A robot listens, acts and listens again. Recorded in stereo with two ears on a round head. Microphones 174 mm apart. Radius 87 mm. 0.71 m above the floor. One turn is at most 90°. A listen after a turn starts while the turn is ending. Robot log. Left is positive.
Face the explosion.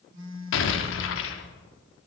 note: The explosion: about 70° left or 110° left.
cmd yaw +70
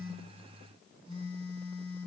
cmd idle
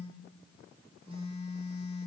end: I heard an explosion, but can't make it out now. It was about straight ahead or 40° left.